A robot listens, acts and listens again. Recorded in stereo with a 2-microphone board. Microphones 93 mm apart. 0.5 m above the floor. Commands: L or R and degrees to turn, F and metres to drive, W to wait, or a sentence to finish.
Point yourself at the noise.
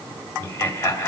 L25
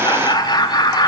L125
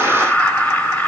L20
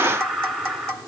Facing the laughter, 2 to 4 m away.